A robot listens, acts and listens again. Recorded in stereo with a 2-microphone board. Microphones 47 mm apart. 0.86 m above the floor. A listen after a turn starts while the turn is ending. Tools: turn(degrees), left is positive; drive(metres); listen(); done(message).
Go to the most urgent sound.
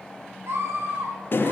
turn(degrees=-65)
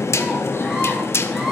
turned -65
listen()
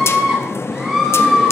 drive(metres=1.0)
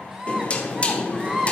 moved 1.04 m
turn(degrees=-15)
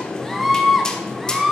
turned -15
drive(metres=1.0)
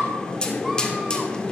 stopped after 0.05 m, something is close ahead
listen()
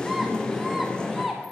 done("Arrived at the scream, straight ahead.")